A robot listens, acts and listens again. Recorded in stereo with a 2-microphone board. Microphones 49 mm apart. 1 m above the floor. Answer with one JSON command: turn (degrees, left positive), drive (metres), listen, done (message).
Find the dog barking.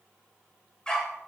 {"turn": 20}
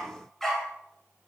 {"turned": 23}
{"turn": 30}
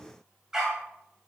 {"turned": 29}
{"turn": -10}
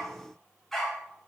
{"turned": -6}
{"done": "Found it: a dog barking, straight ahead, 2 to 4 m away."}